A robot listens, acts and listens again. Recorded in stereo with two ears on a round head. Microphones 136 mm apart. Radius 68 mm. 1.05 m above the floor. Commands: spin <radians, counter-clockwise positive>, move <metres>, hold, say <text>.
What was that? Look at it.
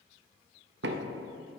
spin -1.57
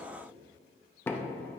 spin 0.26
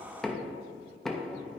say Facing the knocking.